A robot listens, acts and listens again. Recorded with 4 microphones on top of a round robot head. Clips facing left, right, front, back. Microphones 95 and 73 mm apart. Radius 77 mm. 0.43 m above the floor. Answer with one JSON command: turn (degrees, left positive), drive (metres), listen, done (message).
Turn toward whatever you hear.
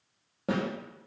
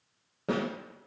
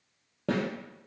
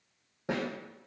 {"done": "Facing the snare drum."}